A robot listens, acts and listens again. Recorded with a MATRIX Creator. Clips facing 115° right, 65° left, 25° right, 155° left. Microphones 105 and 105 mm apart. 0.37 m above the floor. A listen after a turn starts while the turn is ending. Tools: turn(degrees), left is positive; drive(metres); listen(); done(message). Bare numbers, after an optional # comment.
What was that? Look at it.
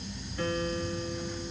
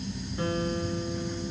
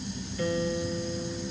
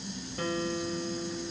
# The guitar: 135° left.
turn(135)
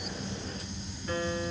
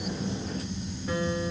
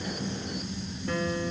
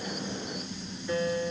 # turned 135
# The guitar is now 10° right.
turn(-10)
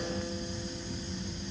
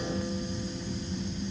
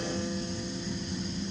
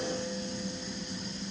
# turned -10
listen()
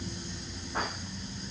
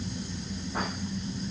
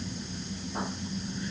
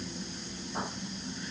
listen()
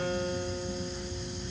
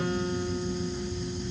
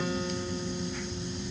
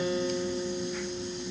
done("Facing the guitar.")